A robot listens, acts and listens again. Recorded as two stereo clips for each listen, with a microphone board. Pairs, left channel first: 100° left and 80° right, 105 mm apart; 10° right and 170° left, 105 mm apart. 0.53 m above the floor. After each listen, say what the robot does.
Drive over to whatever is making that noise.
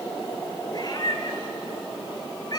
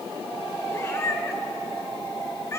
Turn 50° left.
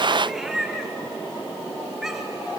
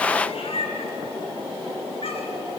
Drive 1.0 m forward.
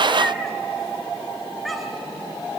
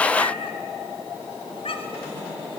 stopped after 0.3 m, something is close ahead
Turn 10° left.
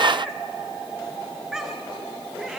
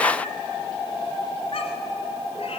Something is in my way. I am facing the cat meowing but have not reached it.